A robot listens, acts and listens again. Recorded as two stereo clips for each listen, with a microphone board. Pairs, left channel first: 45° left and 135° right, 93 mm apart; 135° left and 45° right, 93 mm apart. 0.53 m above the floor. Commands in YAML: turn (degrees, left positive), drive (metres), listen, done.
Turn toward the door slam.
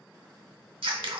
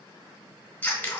listen: true
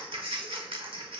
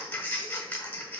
listen: true
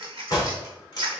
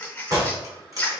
done: "Facing the door slam."